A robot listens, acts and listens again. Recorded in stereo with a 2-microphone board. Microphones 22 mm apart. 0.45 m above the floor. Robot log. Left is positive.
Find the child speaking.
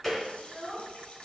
cmd yaw +30
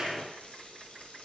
cmd idle
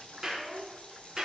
note: So it is at 160° left.
cmd yaw +160
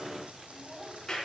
end: Found it: a child speaking, straight ahead.